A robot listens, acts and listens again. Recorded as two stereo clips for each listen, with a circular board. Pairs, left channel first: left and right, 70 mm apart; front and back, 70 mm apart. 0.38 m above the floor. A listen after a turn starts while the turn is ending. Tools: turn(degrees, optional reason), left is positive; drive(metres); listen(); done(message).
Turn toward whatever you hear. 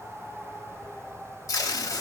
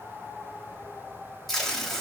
turn(degrees=90, reason="The tape being pulled: 90° left.")
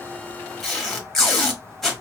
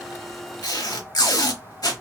done("Found it: tape being pulled, straight ahead.")